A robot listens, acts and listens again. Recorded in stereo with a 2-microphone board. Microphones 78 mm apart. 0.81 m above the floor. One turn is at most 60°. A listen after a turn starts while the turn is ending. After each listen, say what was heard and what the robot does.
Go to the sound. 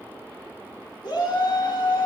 The shout: about 65° left or 115° left. Turn 60° left.
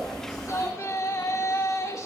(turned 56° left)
So it is at 45° left. Turn 45° left.
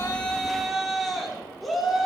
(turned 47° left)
Drive 1.0 m forward.
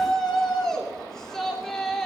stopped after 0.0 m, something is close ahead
The shout is now 10° left. Turn 10° left.
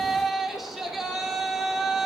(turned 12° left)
Something is in my way. I am facing the shout but have not reached it.